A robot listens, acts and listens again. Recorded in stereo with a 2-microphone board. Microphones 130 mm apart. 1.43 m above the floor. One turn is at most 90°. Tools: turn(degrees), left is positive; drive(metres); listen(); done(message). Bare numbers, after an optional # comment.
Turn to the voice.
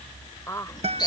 # The woman speaking: about 20° left or 160° left.
turn(20)
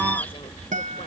listen()
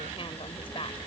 # So it is at 135° left.
turn(90)
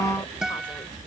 # Nothing new. It was at 45° left.
turn(45)
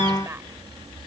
listen()
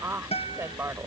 # The woman speaking is now 20° right.
turn(-20)
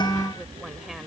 listen()
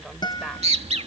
listen()
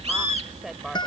done("Facing the woman speaking.")